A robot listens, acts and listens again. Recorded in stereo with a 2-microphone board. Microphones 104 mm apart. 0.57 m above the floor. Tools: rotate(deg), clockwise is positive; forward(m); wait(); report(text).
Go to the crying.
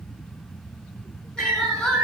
rotate(-30)
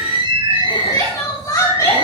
rotate(-145)
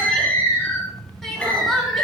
forward(1.0)
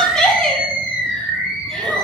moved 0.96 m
forward(1.0)
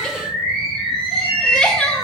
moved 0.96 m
rotate(-10)
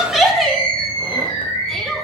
forward(1.0)
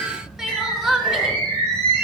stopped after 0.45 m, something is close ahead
report("Arrived at the crying, straight ahead.")